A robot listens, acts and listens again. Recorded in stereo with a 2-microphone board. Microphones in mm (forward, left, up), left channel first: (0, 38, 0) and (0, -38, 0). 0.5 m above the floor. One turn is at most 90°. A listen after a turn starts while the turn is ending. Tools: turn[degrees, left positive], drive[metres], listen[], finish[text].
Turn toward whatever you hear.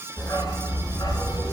Thought: The dog barking: about 55° left or 125° left.
Action: turn[55]
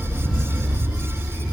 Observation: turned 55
Thought: So it is at 10° right.
Action: turn[-10]
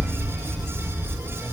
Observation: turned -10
Thought: The dog barking is now 10° right.
Action: turn[-10]
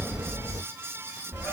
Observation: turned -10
Thought: The dog barking is now 10° right.
Action: turn[-10]
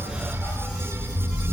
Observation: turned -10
Action: finish[Facing the dog barking.]